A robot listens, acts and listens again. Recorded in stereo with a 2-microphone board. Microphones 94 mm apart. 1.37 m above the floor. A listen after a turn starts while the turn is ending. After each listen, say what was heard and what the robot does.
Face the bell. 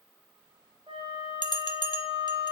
The bell: about 55° left or 125° left. Turn 55° left.
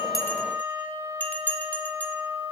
So it is at 20° left. Turn 20° left.
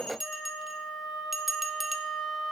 Facing the bell.